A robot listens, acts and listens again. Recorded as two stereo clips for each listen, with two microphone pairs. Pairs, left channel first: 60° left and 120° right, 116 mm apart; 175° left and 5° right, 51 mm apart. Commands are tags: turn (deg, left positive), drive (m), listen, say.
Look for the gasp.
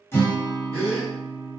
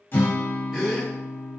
<turn deg="75"/>
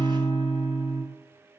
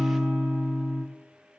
<say>I heard a gasp from this way, but can't make it out now.</say>